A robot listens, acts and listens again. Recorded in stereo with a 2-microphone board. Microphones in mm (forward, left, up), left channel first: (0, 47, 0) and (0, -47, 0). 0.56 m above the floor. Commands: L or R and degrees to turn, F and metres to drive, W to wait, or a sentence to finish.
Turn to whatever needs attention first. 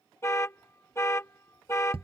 L30
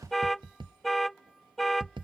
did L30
Facing the alarm.